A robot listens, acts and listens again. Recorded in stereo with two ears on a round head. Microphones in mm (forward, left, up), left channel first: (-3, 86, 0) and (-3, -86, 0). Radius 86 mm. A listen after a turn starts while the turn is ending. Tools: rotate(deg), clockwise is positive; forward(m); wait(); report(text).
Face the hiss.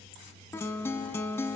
wait()
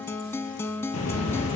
rotate(-90)
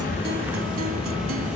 report("Found it: a hiss, straight ahead.")